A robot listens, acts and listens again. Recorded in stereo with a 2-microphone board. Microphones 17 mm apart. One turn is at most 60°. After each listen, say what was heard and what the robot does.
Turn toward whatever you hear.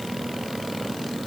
Keep listening.
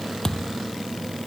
The thud: about 40° left or 140° left. Turn 40° left.
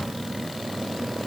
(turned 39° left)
Keep listening.
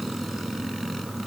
I heard a thud, but can't make it out now. It was about straight ahead or 105° left.